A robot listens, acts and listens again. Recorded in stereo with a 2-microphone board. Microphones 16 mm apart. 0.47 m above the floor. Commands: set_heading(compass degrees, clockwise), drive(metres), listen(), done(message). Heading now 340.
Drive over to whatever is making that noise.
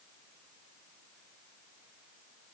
listen()
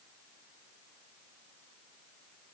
listen()
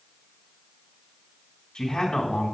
set_heading(275)
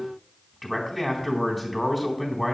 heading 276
set_heading(266)
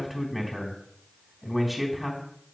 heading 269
drive(1.0)
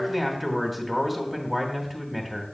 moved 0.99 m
drive(1.0)
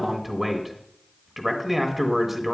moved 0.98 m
drive(1.0)
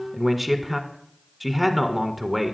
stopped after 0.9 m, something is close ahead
set_heading(279)
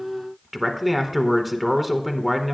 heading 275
done("Arrived at the man speaking, straight ahead.")